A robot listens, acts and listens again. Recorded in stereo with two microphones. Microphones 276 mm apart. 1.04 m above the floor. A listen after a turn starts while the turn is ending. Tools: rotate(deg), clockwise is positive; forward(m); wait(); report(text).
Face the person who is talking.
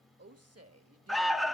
rotate(60)
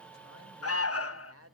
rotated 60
rotate(55)
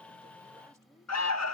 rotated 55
wait()
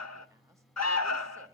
wait()
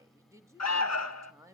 rotate(10)
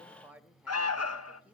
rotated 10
report("Facing the woman speaking.")